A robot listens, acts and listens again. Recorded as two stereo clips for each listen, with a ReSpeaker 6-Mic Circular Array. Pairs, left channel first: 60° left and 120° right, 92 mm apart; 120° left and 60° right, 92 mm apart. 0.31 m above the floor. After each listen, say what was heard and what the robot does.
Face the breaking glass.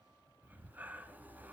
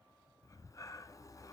Keep listening.
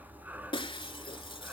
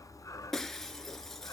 The breaking glass: 35° left. Turn 35° left.
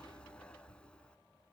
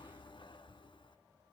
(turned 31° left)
I heard breaking glass from this way, but can't make it out now.